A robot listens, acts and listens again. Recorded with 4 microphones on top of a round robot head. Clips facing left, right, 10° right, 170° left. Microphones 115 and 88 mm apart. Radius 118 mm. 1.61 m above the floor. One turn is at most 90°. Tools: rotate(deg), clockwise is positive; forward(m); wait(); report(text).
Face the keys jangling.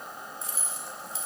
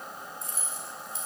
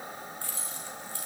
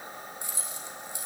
rotate(-90)
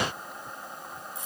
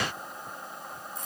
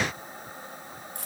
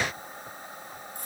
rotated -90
rotate(-10)
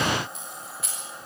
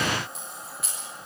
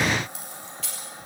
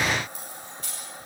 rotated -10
report("Facing the keys jangling.")